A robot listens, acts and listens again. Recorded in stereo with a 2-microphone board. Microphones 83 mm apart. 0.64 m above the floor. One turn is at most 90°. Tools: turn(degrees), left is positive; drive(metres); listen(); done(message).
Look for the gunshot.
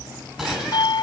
turn(degrees=-30)
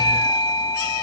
listen()
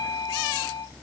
done("I heard a gunshot, but can't make it out now. It was about 25° left or 145° right.")